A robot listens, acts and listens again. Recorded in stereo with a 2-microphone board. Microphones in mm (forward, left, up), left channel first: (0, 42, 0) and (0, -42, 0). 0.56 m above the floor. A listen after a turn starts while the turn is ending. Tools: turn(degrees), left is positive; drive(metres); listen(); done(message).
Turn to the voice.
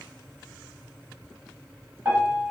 listen()
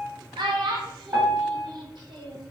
turn(degrees=-65)
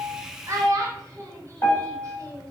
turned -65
turn(degrees=-40)
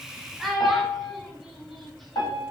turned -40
done("Facing the child speaking.")